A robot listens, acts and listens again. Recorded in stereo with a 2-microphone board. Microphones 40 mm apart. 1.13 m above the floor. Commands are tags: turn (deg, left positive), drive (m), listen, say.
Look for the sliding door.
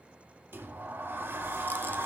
<turn deg="-60"/>
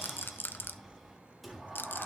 <say>Facing the sliding door.</say>